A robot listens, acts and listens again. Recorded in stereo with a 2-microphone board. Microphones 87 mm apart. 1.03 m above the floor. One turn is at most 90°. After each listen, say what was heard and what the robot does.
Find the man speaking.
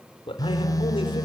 Turn 90° left.
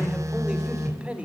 So it is at 15° right. Turn 15° right.
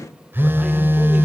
Keep listening.
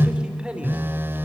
The man speaking is now 15° right. Turn 15° right.
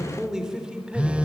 The man speaking is now 10° right. Turn 10° right.
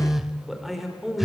Found it: a man speaking, straight ahead, over 4 m away.